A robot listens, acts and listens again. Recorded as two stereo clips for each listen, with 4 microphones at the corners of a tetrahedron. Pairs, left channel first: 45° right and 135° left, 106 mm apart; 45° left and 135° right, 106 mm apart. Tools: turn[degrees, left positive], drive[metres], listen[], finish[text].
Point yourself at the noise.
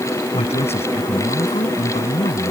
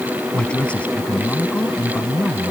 Thought: The man speaking: 30° right.
Action: turn[-30]
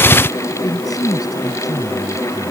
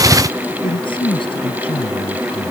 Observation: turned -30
Thought: The man speaking is now 10° left.
Action: turn[10]
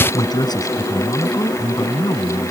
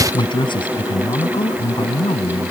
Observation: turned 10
Action: finish[Found it: a man speaking, straight ahead.]